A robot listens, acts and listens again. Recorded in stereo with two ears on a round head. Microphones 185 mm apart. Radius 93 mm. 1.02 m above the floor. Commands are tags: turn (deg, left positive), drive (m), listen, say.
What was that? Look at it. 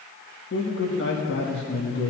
<turn deg="50"/>
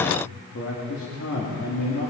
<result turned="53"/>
<turn deg="75"/>
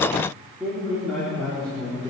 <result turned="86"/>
<say>Found it: a man speaking, straight ahead, 2 to 4 m away.</say>